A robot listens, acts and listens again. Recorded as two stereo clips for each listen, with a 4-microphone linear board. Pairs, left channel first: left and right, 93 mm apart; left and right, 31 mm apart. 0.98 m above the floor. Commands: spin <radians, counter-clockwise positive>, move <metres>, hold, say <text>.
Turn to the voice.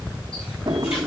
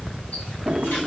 hold
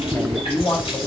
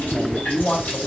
spin 0.35
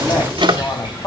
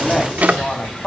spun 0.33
spin 2.44
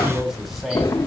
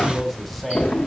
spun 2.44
say Found it: a man speaking, straight ahead, 2 to 4 m away.